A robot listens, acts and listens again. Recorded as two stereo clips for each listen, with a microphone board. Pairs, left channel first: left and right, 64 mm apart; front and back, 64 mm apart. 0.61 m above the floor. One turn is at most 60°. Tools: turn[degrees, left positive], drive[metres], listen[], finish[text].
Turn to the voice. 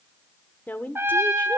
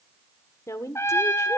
Thought: The woman speaking: 30° left.
Action: turn[30]
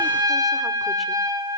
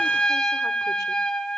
Action: listen[]
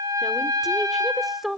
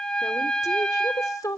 Action: finish[Facing the woman speaking.]